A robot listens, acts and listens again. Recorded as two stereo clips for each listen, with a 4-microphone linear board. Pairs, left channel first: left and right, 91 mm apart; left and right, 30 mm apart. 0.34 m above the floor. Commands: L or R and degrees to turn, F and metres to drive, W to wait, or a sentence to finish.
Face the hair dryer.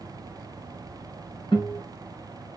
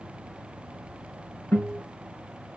W
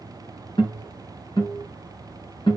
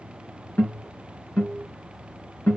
W
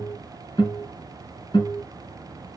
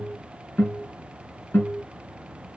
I can't make out a hair dryer, only a guitar.